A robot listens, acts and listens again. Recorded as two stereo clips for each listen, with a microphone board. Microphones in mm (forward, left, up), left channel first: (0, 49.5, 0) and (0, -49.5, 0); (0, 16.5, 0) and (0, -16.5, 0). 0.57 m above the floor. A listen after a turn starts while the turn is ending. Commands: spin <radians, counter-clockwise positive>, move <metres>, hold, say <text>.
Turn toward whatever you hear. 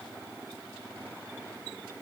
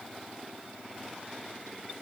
hold
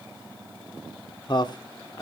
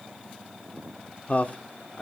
spin 0.70
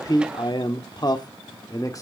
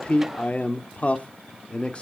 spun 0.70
spin 0.61
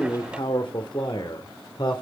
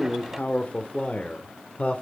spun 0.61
spin 2.27
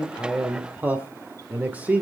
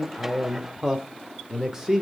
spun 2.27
spin -0.26
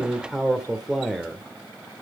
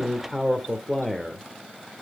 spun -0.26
say Facing the man speaking, 1 to 2 m away.